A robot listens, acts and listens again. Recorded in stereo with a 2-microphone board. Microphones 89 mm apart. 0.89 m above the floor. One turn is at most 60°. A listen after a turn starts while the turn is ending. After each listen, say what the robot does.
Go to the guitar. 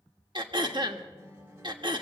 Turn 30° right.
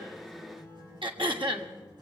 Turn 60° right.
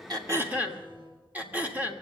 Turn 60° right.
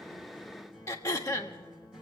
Drive 1.0 m forward.
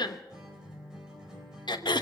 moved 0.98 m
Drive 1.0 m forward.
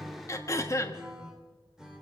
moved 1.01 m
Drive 1.0 m forward.
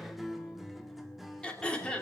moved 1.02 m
Drive 1.0 m forward.
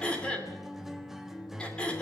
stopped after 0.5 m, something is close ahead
Arrived at the guitar, straight ahead.